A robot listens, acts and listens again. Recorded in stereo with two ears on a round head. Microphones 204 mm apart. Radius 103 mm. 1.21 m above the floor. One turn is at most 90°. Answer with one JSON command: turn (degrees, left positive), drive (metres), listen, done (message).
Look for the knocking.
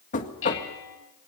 {"turn": 35}
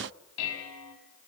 {"listen": true}
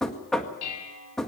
{"done": "Found it: knocking, straight ahead, 1 to 2 m away."}